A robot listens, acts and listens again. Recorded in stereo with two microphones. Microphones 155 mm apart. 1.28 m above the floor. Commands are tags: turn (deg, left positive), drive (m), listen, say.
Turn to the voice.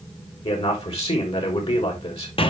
<turn deg="40"/>
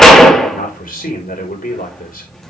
<turn deg="95"/>
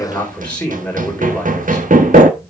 <turn deg="10"/>
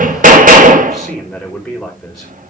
<say>Found it: a man speaking, straight ahead.</say>